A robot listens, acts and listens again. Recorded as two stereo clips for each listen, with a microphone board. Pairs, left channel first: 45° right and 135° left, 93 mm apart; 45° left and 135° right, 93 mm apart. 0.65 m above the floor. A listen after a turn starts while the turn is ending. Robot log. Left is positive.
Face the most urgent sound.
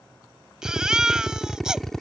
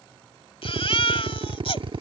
note: The baby crying: 50° left.
cmd yaw +50
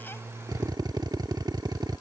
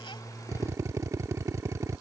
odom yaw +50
cmd idle
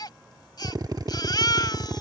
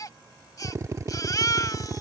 end: Found it: a baby crying, straight ahead.